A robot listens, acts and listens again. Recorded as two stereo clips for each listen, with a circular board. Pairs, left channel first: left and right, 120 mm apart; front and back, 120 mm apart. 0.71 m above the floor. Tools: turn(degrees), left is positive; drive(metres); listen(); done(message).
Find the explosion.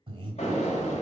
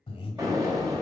turn(degrees=115)
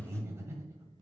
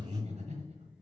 done("Facing where the explosion came from. I can't hear it now.")